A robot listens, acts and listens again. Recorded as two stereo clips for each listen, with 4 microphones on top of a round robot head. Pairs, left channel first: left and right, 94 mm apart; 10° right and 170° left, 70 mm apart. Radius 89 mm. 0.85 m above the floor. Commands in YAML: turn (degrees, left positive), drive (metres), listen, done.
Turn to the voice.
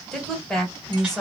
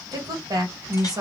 turn: 175
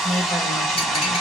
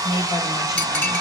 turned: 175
done: "Found it: a woman speaking, straight ahead, 1 to 2 m away."